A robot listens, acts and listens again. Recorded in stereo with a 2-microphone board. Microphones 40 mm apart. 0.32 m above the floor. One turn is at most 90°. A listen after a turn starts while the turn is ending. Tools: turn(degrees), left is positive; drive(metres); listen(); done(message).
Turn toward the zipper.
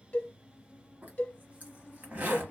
turn(degrees=-40)
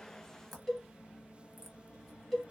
listen()
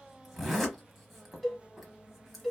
done("Facing the zipper.")